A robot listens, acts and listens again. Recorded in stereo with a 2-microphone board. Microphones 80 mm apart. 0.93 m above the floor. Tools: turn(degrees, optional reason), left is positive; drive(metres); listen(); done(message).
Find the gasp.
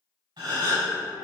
turn(degrees=-75, reason="The gasp: about 75° right or 105° right.")
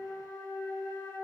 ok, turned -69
listen()
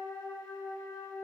done("I heard a gasp, but can't make it out now. It was about 5° right or 35° right.")